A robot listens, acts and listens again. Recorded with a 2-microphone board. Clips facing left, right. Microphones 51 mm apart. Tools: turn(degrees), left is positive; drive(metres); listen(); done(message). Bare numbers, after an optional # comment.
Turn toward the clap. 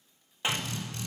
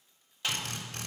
# The clap: about 25° left or 155° left.
turn(25)
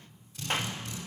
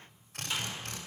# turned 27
# So it is at 130° left.
turn(130)
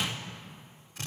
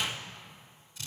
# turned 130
listen()
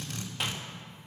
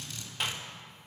listen()
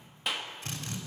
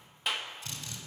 done("Found it: a clap, straight ahead.")